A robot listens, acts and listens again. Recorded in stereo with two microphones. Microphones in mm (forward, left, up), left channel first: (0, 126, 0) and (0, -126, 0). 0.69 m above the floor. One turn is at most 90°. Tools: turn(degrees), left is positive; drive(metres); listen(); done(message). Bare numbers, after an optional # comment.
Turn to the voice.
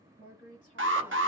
# The woman speaking: about 30° left or 150° left.
turn(30)
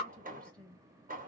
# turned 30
done("Found it: a woman speaking, straight ahead, 1 to 2 m away.")